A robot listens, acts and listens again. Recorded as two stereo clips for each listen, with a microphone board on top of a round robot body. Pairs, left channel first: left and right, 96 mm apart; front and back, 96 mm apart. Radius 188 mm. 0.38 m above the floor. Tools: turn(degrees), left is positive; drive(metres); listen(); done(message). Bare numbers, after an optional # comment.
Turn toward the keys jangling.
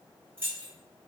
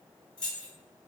# The keys jangling: 25° right.
turn(-25)
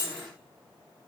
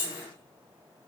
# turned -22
done("Found it: keys jangling, straight ahead.")